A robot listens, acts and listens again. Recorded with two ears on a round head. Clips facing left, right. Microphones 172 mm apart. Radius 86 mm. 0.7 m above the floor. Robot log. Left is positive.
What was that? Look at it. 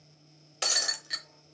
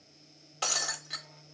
note: The breaking glass: about 25° left or 155° left.
cmd yaw +25
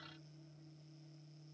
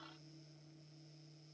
cmd idle
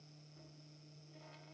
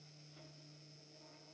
end: I heard breaking glass, but can't make it out now. It was about straight ahead or 130° left.